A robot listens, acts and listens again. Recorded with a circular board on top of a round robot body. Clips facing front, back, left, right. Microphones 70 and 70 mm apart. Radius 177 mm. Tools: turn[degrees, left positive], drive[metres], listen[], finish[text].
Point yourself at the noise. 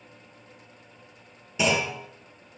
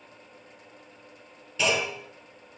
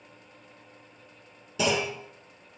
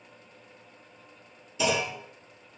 Thought: The clunk: 80° left.
Action: turn[80]
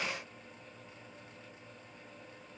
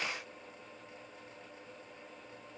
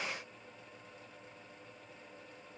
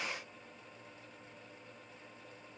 Action: finish[Facing where the clunk came from. I can't hear it now.]